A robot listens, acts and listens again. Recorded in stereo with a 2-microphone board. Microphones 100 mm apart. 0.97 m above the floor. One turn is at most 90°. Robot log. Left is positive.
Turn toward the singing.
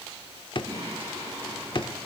note: The singing: about 35° right or 145° right.
cmd yaw -35
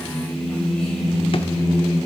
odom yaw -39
note: So it is at 10° left.
cmd yaw +10
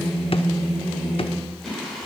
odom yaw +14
end: Found it: singing, straight ahead, 2 to 4 m away.